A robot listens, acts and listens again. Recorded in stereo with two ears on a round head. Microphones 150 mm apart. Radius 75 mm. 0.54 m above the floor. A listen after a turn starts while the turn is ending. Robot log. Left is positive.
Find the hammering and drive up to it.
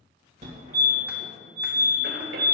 cmd idle
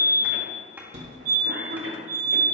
cmd idle
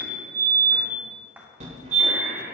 cmd yaw -30
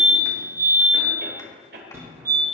cmd idle
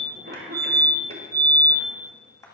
note: So it is at 20° left.
cmd yaw +20
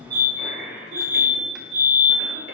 cmd idle
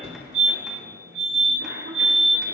cmd idle
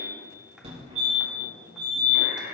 end: I heard hammering from this way, but can't make it out now. I did not reach it.